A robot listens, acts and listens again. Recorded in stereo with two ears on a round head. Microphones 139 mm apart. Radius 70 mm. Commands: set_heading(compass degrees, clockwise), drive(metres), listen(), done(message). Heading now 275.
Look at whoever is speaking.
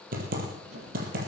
listen()
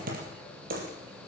listen()
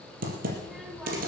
set_heading(245)
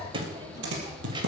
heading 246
set_heading(271)
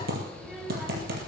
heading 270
done("Facing the child speaking, 2 to 4 m away.")